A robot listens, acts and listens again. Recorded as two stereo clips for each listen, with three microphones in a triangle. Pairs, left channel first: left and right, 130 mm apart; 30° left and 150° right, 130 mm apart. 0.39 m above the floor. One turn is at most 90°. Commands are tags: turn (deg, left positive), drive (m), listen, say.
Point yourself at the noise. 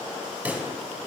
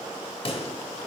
<turn deg="-10"/>
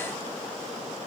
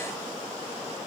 <say>Facing where the pop came from. I can't hear it now.</say>